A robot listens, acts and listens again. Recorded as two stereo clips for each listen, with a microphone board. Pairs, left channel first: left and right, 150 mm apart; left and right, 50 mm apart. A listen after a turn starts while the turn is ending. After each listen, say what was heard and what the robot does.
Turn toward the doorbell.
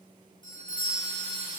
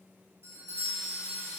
The doorbell: about 55° right or 125° right. Turn 55° right.
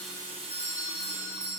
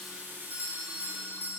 So it is at 65° right. Turn 65° right.
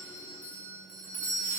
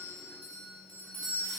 The doorbell is now 10° left. Turn 10° left.
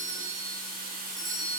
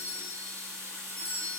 Found it: a doorbell, straight ahead.